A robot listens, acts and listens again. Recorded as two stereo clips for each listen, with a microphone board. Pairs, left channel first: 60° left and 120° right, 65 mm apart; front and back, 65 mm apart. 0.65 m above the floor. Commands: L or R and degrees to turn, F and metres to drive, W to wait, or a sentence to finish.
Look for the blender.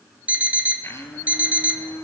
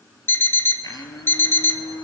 L15
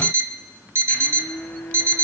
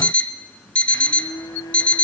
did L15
Found it: a blender, straight ahead, 2 to 4 m away.